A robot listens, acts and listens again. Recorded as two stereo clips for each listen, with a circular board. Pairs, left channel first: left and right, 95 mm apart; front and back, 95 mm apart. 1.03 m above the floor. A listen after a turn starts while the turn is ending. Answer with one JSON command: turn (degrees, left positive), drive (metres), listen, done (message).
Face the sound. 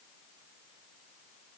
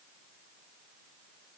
{"listen": true}
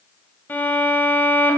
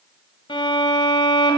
{"turn": 20}
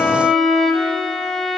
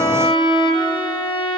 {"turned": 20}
{"done": "Facing the violin."}